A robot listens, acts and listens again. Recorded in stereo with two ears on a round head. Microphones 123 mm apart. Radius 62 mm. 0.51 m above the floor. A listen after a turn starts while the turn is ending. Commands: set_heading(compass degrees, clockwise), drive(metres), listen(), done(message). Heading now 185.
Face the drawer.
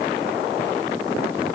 listen()
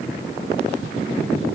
listen()
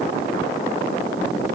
done("I can't make out a drawer.")